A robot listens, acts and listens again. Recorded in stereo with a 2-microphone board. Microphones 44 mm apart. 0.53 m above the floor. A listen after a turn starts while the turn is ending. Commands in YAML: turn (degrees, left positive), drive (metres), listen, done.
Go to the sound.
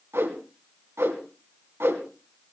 turn: -75
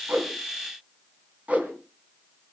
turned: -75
turn: -30
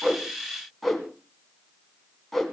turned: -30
drive: 1.0
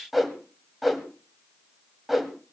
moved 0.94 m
drive: 1.0
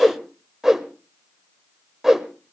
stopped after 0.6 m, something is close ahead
turn: -10
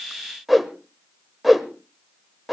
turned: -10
done: "Arrived at the whoosh, straight ahead."